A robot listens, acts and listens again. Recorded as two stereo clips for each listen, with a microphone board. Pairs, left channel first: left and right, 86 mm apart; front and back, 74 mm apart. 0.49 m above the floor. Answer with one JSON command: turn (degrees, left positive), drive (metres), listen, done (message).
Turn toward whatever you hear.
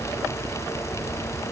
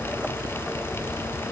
{"listen": true}
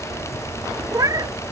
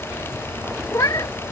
{"turn": -45}
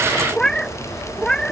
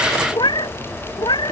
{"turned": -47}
{"turn": 10}
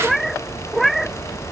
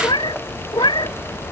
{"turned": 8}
{"done": "Found it: a cat meowing, straight ahead."}